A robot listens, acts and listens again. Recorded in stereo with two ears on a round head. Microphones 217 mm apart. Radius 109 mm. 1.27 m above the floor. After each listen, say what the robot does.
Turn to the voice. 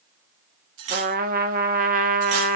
Keep listening.
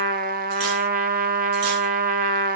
Keep listening.
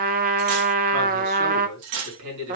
Turn 75° right.
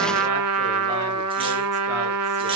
Keep listening.
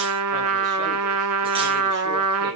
Found it: a man speaking, straight ahead, over 4 m away.